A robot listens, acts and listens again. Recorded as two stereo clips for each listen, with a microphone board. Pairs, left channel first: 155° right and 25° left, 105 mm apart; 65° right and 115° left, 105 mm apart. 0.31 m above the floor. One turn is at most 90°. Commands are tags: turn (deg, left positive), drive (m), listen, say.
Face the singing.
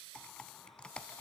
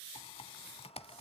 <listen/>
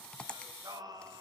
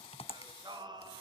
<turn deg="70"/>
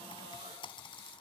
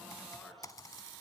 <listen/>
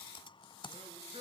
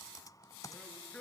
<turn deg="10"/>
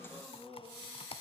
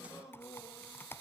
<say>Facing the singing, over 4 m away.</say>